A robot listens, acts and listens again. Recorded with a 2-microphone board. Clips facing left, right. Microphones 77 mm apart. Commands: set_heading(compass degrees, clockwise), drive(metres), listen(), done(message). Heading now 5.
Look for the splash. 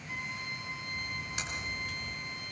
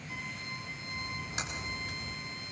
set_heading(30)
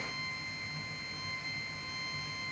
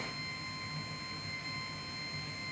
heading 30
listen()
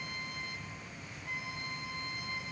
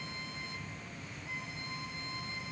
done("I heard a splash, but can't make it out now. It was about straight ahead or 130° right.")